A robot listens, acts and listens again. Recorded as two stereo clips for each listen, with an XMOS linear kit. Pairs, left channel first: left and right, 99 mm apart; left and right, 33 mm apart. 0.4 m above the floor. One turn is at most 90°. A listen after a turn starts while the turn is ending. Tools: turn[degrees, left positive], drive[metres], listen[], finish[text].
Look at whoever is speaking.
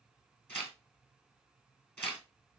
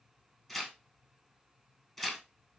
Action: listen[]
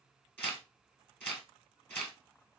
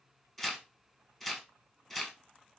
Action: listen[]
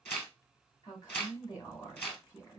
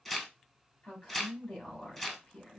Thought: The woman speaking: about 45° left or 135° left.
Action: turn[45]
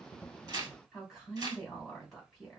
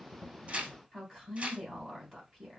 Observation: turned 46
Action: finish[Found it: a woman speaking, straight ahead, 2 to 4 m away.]